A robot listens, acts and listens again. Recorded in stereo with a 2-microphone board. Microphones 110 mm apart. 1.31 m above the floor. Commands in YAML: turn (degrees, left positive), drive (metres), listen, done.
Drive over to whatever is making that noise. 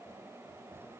listen: true
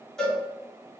turn: 30
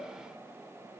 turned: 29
listen: true
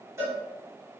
turn: -25
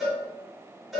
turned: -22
drive: 1.0
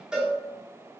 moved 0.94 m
drive: 1.0
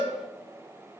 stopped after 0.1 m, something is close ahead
turn: -10
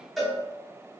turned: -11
done: "Arrived at the cowbell, straight ahead."